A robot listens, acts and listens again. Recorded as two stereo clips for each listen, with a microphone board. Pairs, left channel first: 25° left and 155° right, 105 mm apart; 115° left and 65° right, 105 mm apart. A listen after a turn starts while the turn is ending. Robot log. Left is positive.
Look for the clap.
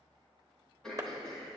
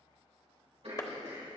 note: The clap: 155° left.
cmd yaw +155
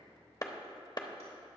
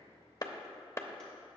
note: The clap is now 55° left.
cmd yaw +55
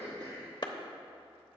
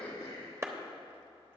note: The clap is now 10° right.
cmd yaw -10
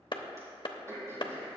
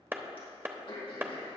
end: Facing the clap.